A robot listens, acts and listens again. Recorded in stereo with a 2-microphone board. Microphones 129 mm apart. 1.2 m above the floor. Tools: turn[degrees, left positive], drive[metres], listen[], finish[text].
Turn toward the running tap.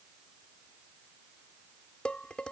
Action: listen[]
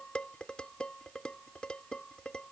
Action: listen[]
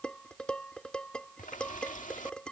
Action: turn[90]
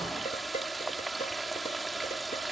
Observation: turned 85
Action: finish[Facing the running tap.]